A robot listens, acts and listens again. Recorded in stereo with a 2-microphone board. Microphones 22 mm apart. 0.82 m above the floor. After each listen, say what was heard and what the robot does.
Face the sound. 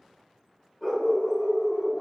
The dog barking: about 40° left or 140° left. Turn 40° left.
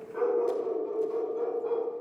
So it is at 100° left. Turn 100° left.
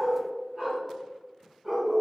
The dog barking is now 30° right. Turn 30° right.
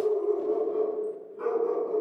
The dog barking is now 10° right. Turn 10° right.
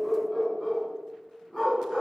Found it: a dog barking, straight ahead.